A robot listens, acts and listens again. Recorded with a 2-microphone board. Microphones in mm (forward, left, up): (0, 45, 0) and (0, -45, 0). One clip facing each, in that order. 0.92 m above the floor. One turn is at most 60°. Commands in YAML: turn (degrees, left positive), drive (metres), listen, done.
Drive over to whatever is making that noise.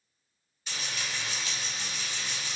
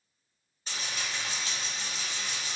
turn: -35
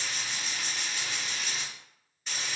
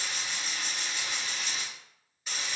drive: 1.0
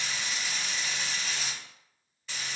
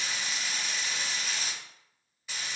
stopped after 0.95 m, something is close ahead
turn: -10
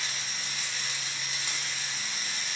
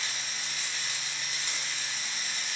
done: "Arrived at the frying, straight ahead."